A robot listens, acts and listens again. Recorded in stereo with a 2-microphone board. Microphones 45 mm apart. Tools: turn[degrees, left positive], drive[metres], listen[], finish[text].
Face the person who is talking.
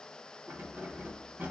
Action: listen[]
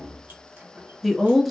Action: turn[-30]
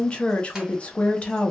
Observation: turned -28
Thought: So it is at 25° left.
Action: turn[25]
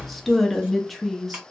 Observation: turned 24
Action: finish[Facing the woman speaking, under 1 m away.]